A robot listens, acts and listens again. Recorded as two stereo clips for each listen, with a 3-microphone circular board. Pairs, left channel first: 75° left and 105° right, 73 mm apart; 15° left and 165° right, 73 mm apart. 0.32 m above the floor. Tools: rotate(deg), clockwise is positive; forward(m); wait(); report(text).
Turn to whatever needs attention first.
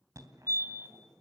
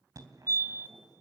rotate(135)
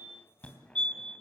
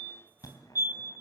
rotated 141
report("Facing the fire alarm, 2 to 4 m away.")